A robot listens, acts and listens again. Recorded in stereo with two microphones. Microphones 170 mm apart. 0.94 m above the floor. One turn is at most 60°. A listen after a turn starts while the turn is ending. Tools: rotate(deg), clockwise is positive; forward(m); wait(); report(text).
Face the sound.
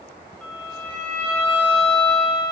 rotate(-30)
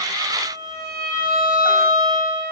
rotate(20)
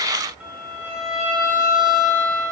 report("Facing the violin.")